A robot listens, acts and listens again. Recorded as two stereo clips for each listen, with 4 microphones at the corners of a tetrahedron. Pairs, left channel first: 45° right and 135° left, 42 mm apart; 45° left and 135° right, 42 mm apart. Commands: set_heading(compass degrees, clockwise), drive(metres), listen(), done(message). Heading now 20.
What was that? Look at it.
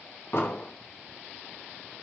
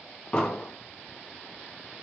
set_heading(40)
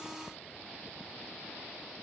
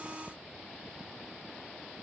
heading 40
done("Facing where the explosion came from. I can't hear it now.")